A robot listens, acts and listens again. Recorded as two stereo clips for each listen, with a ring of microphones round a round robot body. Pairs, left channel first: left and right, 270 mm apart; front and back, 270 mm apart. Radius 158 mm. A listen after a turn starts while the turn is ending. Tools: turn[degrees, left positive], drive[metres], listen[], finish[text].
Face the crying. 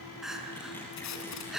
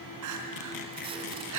Thought: The crying: straight behind.
Action: turn[180]
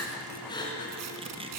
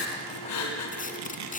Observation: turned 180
Thought: The crying is now 15° left.
Action: turn[15]
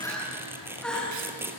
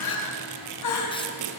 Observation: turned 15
Action: finish[Facing the crying, over 4 m away.]